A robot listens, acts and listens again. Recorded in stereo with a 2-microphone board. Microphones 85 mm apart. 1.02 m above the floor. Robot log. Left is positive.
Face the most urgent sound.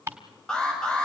cmd yaw +30
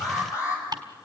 note: So it is at 145° left.
cmd yaw +145
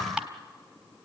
cmd idle
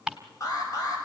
note: The alarm is now 40° left.
cmd yaw +40
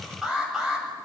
end: Facing the alarm.